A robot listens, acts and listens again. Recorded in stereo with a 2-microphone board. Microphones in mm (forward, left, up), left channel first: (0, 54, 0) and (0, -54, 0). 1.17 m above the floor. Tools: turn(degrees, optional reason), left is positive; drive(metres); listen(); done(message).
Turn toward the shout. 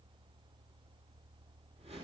listen()
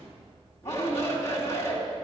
turn(degrees=30, reason="The shout: about 30° left or 150° left.")
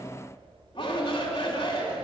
turn(degrees=120, reason="So it is at 120° left.")
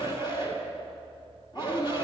turn(degrees=45, reason="The shout is now 45° left.")
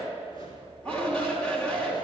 turn(degrees=10, reason="The shout is now 10° left.")
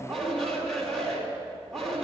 done("Found it: a shout, straight ahead.")